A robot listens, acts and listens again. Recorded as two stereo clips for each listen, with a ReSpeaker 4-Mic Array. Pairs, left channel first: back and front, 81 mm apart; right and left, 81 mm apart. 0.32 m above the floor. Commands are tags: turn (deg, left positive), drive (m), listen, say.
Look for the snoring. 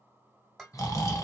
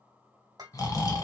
<turn deg="-135"/>
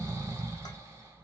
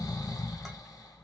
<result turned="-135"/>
<turn deg="-50"/>
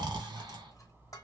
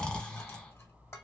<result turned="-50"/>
<turn deg="-10"/>
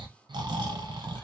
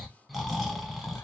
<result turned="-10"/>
<say>Found it: snoring, straight ahead.</say>